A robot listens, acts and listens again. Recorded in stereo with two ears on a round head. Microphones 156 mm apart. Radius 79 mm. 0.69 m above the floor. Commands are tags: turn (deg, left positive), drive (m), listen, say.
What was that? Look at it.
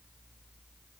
<listen/>
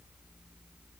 <listen/>
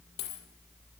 <turn deg="65"/>
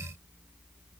<listen/>
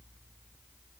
<say>I heard a dropped coin, but can't make it out now. It was about straight ahead or 50° left.</say>